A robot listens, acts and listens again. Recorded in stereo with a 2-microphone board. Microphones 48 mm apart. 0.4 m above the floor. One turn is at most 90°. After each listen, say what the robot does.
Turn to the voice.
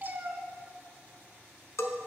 Keep listening.
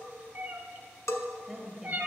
Turn 30° right.
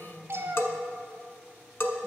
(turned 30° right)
Keep listening.
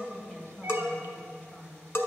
Turn 20° left.
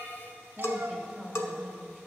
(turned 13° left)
Turn 10° left.
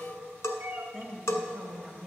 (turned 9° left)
Found it: a woman speaking, straight ahead, 1 to 2 m away.